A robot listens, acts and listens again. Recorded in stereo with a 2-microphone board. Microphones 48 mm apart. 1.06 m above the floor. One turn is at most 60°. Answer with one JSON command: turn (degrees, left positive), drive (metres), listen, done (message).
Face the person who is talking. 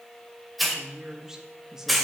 {"turn": -30}
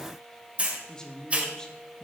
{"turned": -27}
{"turn": 15}
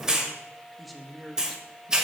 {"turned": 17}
{"done": "Facing the woman speaking."}